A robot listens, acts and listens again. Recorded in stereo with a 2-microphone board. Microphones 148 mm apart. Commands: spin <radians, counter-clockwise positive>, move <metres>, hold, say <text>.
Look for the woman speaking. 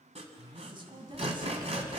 spin -0.61
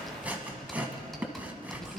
hold
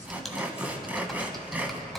hold
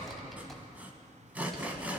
say I heard a woman speaking, but can't make it out now. It was about straight ahead or 110° right.